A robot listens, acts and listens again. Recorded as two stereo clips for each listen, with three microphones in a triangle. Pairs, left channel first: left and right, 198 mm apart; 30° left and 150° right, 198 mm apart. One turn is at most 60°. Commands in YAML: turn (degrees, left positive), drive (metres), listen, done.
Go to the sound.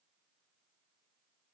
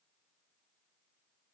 listen: true
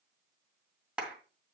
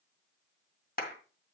drive: 1.0
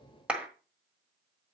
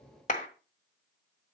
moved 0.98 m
drive: 1.0
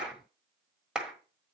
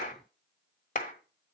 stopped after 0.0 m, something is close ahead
done: "I am next to the clap."